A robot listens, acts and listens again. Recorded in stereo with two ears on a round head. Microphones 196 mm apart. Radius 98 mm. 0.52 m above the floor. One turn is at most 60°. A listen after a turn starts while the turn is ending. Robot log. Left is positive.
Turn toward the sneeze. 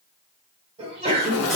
note: The sneeze: about 25° right or 155° right.
cmd yaw -25
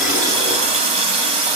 cmd idle
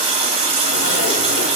end: I heard a sneeze, but can't make it out now. It was about straight ahead or 130° right.